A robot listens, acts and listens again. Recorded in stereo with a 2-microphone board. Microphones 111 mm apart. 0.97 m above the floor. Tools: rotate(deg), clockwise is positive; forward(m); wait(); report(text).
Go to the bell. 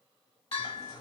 rotate(-90)
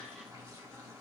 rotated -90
wait()
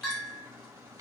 forward(1.0)
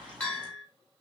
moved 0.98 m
rotate(-10)
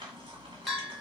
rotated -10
forward(1.0)
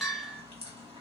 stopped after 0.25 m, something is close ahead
report("Arrived at the bell, straight ahead.")